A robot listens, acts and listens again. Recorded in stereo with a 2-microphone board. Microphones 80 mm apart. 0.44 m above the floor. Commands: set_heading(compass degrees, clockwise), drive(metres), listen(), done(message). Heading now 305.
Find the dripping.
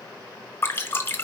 set_heading(275)
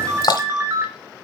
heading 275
set_heading(160)
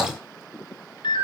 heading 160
listen()
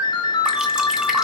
listen()
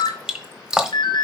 set_heading(170)
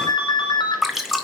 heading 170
done("Facing the dripping, 1 to 2 m away.")